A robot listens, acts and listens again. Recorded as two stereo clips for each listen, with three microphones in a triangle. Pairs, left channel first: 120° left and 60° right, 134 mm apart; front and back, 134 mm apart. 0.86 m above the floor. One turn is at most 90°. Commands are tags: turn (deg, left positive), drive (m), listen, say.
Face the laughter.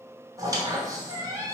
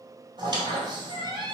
<listen/>
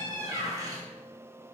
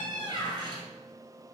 <listen/>
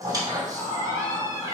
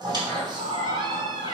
<turn deg="-90"/>
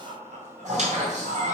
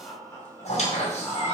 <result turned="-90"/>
<turn deg="-75"/>
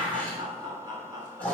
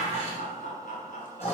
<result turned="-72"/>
<say>Found it: laughter, straight ahead, 2 to 4 m away.</say>